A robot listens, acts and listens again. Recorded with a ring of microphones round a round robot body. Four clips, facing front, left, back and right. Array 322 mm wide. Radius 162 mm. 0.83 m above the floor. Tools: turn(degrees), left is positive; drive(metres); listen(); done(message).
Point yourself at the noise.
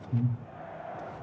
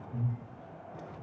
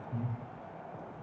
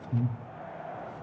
turn(degrees=-70)
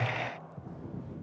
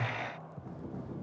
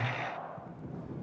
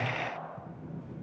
listen()
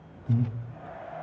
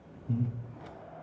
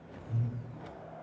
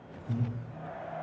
done("Found it: breathing, straight ahead, 1 to 2 m away.")